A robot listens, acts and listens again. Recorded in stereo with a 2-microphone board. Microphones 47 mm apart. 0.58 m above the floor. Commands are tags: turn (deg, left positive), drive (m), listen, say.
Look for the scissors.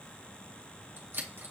<turn deg="-55"/>
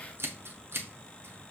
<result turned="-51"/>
<turn deg="-65"/>
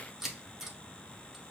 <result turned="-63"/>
<say>Found it: scissors, straight ahead.</say>